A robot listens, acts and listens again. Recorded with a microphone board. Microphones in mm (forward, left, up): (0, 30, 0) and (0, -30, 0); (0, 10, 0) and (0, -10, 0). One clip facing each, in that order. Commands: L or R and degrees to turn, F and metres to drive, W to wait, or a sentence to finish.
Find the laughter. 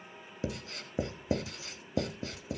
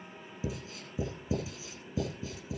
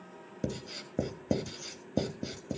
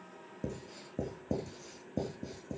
W
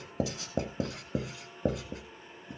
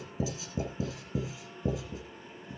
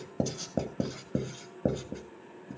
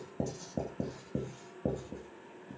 W
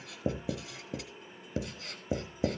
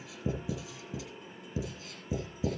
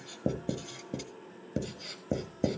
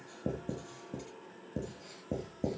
I can't make out laughter, only writing.